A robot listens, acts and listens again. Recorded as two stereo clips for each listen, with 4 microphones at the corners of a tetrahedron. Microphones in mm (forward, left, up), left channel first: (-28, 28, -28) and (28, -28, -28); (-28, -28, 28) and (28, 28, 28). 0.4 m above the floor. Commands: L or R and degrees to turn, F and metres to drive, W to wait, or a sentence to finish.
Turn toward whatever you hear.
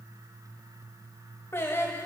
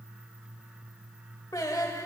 R170
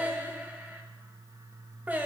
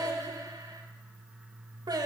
L25
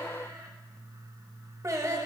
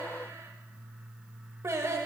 Found it: singing, straight ahead, under 1 m away.